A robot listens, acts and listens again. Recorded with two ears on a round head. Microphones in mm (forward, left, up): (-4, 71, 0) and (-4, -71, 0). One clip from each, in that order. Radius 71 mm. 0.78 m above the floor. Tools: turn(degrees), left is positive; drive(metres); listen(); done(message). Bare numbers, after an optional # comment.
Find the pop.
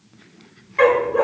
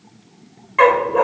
listen()
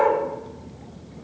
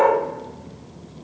listen()
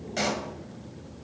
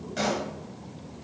# The pop: about 35° left or 145° left.
turn(35)
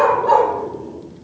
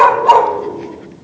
listen()
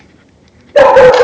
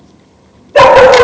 done("I heard a pop, but can't make it out now. It was about straight ahead or 110° left.")